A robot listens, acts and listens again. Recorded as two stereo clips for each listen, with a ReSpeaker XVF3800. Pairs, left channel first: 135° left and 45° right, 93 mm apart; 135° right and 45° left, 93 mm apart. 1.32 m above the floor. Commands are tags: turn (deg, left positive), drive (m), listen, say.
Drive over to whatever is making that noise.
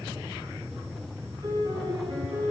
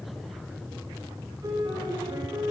<drive m="1.0"/>
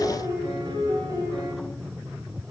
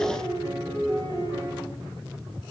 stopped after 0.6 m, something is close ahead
<say>Something is in my way. I am facing the piano but have not reached it.</say>